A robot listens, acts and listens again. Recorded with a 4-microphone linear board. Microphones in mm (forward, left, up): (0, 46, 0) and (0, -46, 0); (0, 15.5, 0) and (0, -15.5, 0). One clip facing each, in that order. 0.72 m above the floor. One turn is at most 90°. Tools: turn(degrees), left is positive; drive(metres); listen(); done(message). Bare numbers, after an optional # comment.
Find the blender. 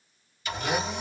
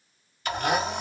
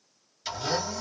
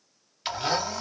# The blender: about 55° right or 125° right.
turn(-55)
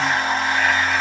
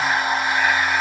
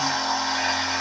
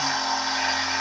# So it is at 10° right.
turn(-10)
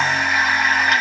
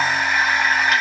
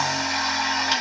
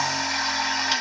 done("Facing the blender, 1 to 2 m away.")